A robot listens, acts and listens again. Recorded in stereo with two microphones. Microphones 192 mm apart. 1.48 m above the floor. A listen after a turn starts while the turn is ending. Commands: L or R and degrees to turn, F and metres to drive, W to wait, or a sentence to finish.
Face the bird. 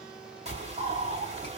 R35
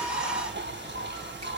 R110
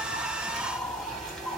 Found it: a bird, straight ahead, 2 to 4 m away.